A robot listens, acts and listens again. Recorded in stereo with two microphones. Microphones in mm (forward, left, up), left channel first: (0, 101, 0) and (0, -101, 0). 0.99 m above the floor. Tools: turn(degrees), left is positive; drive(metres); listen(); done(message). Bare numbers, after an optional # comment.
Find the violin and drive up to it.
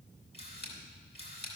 listen()
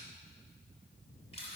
listen()
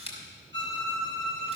# The violin: about 65° right or 115° right.
turn(-65)
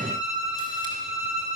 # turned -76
# So it is at 35° right.
turn(-35)
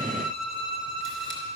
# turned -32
drive(1.0)
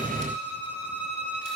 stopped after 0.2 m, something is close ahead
# The violin is now 10° right.
turn(-10)
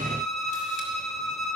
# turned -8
done("Blocked. The violin is further on, straight ahead.")